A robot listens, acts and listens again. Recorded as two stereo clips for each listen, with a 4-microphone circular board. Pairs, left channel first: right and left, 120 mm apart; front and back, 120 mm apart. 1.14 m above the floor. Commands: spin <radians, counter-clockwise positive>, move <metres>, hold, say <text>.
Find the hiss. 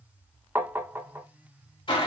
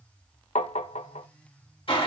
hold
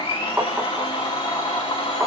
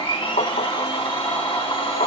hold
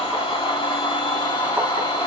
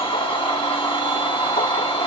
say I can't make out a hiss to turn to.